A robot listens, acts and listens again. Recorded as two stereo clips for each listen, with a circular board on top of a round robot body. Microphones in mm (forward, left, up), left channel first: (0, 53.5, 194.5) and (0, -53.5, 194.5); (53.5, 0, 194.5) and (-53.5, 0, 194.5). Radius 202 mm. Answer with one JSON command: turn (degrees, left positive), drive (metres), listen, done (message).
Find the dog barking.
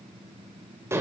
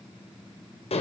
{"listen": true}
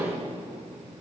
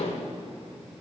{"listen": true}
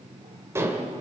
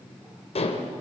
{"done": "I can't make out a dog barking to turn to."}